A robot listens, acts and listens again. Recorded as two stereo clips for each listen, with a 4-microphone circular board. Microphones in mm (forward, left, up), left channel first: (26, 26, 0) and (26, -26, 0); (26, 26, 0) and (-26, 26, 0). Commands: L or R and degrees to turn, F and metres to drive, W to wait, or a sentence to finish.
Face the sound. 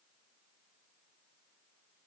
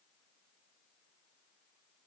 W
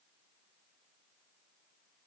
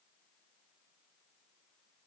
W
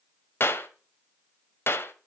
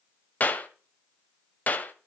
L55
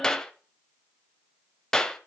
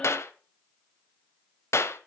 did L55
L15
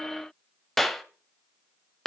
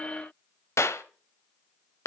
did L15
Found it: a clap, straight ahead, 1 to 2 m away.